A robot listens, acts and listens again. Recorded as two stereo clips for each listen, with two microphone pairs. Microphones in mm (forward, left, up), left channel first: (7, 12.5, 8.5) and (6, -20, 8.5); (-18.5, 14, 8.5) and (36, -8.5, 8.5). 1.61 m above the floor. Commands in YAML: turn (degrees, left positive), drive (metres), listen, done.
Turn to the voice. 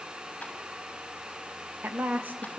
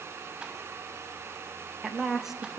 turn: -110
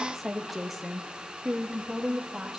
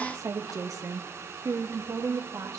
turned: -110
turn: -15
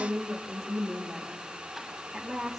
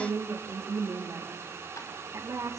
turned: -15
done: "Facing the woman speaking."